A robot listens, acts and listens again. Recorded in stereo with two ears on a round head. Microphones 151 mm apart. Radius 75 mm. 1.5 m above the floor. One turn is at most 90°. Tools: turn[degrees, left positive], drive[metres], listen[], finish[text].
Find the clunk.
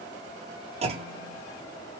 Thought: The clunk: about 35° right or 145° right.
Action: turn[-35]
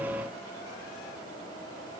Action: listen[]
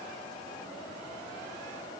Action: finish[I heard a clunk, but can't make it out now. It was about straight ahead or 110° right.]